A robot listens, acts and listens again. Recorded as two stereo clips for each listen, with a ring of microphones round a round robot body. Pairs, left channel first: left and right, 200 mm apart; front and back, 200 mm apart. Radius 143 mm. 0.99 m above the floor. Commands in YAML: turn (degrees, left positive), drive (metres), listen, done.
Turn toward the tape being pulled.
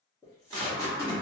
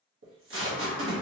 turn: 170
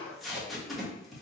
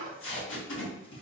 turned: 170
done: "Facing the tape being pulled, 1 to 2 m away."